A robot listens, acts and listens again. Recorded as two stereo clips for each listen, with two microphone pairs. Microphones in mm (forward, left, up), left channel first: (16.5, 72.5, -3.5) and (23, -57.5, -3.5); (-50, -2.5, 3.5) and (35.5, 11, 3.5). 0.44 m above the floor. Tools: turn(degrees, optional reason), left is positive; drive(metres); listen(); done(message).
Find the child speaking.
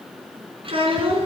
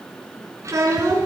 turn(degrees=-45, reason="The child speaking: 45° right.")
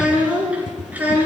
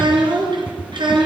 turn(degrees=-10, reason="The child speaking is now 10° right.")
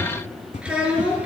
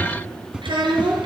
done("Facing the child speaking.")